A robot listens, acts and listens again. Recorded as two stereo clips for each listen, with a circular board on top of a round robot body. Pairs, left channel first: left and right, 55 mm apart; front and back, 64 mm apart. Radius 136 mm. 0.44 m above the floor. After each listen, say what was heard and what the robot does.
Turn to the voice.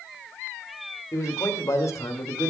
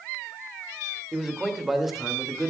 The man speaking: 95° left. Turn 95° left.
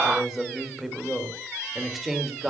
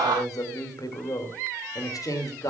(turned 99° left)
Found it: a man speaking, straight ahead, 2 to 4 m away.